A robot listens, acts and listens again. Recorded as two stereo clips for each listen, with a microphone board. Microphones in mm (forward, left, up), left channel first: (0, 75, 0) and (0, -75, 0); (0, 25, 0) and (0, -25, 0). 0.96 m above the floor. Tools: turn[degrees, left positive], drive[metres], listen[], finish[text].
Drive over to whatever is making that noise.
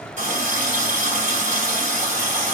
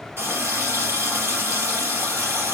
Thought: The running tap: about 55° right or 125° right.
Action: turn[-55]
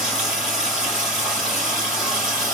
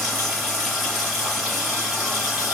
Action: drive[1.0]
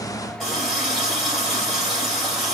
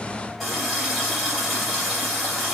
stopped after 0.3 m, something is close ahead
Action: finish[Blocked. The running tap is further on, straight ahead.]